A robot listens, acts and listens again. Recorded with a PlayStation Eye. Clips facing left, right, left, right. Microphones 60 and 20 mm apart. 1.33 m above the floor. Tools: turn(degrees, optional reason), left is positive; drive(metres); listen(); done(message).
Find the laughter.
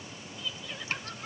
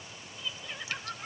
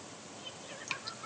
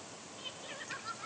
turn(degrees=-30)
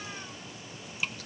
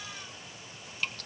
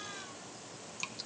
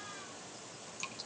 listen()
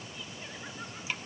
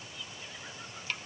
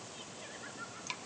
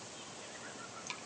listen()
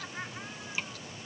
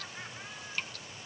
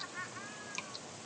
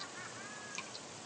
turn(degrees=25, reason="So it is at 25° left.")
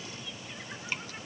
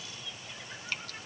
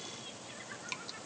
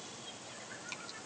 listen()
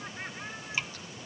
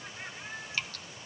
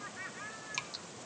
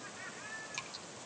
turn(degrees=20, reason="The laughter is now 20° left.")
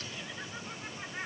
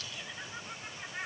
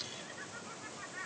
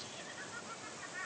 done("Facing the laughter, over 4 m away.")